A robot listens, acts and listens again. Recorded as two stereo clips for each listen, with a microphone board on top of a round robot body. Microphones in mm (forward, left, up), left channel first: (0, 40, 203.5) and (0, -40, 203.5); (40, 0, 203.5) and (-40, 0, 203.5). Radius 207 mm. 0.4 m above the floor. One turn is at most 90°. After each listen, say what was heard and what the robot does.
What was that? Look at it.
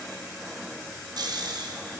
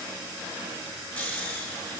The snoring: 65° right. Turn 65° right.
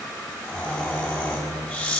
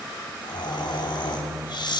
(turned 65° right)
The snoring is now 20° left. Turn 20° left.
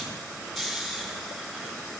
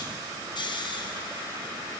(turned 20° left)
Facing the snoring.